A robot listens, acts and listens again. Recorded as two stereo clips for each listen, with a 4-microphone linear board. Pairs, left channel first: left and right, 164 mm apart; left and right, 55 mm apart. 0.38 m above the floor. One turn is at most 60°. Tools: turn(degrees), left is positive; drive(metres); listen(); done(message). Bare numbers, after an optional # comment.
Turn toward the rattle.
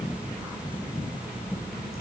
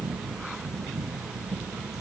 listen()
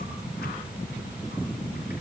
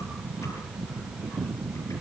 listen()
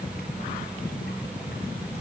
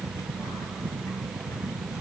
done("I can't make out a rattle to turn to.")